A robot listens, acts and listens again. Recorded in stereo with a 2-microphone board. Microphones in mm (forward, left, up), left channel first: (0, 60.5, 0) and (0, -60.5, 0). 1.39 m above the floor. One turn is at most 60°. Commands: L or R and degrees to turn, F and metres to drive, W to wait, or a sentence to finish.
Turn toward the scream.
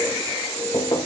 W
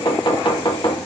W
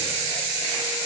I can't make out a scream to turn to.